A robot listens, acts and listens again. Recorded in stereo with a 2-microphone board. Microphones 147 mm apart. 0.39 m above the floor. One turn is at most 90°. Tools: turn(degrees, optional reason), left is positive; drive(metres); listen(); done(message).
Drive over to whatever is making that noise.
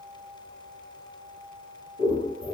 turn(degrees=60, reason="The scissors: about 60° left or 120° left.")
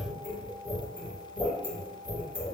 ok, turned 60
turn(degrees=45, reason="So it is at 45° left.")
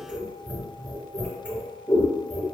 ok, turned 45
drive(metres=1.0)
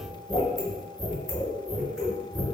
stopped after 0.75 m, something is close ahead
done("I am next to the scissors.")